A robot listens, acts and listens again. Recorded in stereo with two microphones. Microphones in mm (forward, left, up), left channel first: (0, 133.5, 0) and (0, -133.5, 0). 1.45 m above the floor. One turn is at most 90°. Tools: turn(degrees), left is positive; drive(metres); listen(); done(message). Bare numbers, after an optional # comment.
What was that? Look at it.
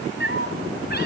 # The cat meowing: about 40° left or 140° left.
turn(40)
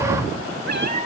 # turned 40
# So it is at 105° left.
turn(90)
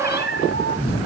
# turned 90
# The cat meowing is now 45° left.
turn(45)
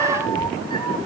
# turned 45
# The cat meowing is now 15° left.
turn(15)
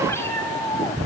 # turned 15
# The cat meowing is now 15° left.
turn(15)
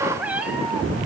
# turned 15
done("Facing the cat meowing, over 4 m away.")